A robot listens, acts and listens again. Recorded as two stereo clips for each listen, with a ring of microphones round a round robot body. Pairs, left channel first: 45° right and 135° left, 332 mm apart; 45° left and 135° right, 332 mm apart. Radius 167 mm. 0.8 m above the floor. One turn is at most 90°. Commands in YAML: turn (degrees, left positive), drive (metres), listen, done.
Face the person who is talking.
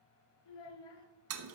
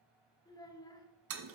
turn: -35
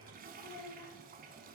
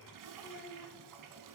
turn: -15
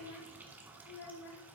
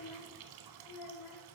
done: "Found it: a child speaking, straight ahead, 1 to 2 m away."